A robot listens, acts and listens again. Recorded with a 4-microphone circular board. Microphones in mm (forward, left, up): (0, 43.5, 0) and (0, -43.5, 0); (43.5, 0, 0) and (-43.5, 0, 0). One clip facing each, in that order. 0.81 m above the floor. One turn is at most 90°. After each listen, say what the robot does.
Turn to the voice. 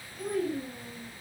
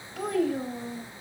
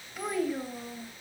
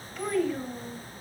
Turn 75° right.
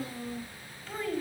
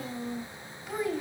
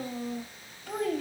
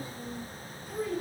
Turn 10° right.
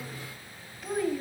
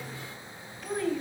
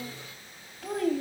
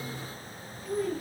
Facing the child speaking, 2 to 4 m away.